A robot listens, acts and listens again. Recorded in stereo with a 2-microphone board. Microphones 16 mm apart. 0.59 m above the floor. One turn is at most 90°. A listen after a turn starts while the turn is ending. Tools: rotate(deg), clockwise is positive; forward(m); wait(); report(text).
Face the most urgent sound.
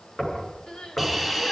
rotate(-70)
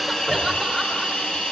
wait()
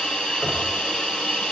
wait()
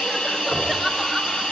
report("I heard crying, but can't make it out now. It was about straight ahead or 40° left.")